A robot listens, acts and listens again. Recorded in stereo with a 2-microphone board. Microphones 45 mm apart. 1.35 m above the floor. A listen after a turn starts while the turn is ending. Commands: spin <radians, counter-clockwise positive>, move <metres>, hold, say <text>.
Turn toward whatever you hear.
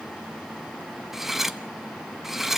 spin -0.52
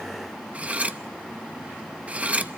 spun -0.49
spin -2.53
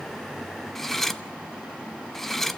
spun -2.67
spin 0.17
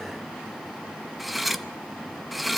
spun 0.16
say Facing the cutlery clinking, under 1 m away.